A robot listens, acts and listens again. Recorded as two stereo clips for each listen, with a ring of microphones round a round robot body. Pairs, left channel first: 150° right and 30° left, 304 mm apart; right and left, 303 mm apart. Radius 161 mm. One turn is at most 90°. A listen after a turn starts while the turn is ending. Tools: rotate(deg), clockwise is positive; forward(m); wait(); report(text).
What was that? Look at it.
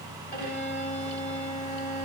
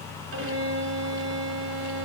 rotate(-90)
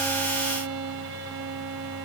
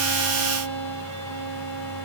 rotate(-85)
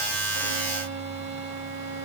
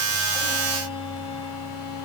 rotate(15)
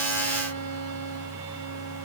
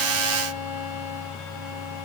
wait()
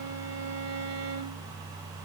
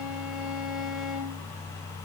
report("Facing the violin, 2 to 4 m away.")